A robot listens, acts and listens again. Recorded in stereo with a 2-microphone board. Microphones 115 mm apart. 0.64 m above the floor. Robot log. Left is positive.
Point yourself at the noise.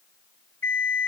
cmd yaw +30
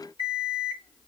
note: So it is at 130° left.
cmd yaw +130
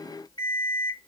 note: The alarm clock is now 45° left.
cmd yaw +45
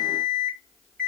note: The alarm clock is now 10° left.
cmd yaw +10
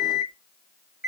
end: Facing the alarm clock, 2 to 4 m away.